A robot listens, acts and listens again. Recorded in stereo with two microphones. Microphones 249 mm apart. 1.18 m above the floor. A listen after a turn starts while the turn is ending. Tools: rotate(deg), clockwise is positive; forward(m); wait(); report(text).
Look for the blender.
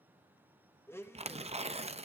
rotate(-30)
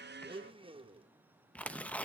rotate(20)
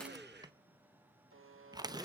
wait()
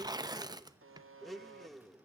report("Found it: a blender, straight ahead.")